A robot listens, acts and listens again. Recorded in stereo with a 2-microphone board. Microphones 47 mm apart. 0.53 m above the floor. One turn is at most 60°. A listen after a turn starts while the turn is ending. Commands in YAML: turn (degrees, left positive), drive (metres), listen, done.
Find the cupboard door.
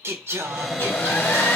turn: 30
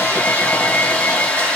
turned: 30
listen: true
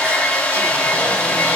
listen: true
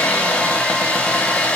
done: "I heard a cupboard door, but can't make it out now. It was about 30° right or 150° left."